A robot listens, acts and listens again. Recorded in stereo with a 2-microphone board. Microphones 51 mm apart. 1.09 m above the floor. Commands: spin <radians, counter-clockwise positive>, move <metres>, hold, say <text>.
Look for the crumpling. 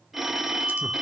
hold
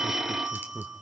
hold
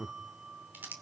spin -0.70
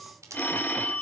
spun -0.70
spin -1.75
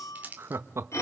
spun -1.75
spin -0.61
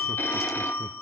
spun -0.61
hold
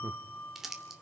say Facing the crumpling.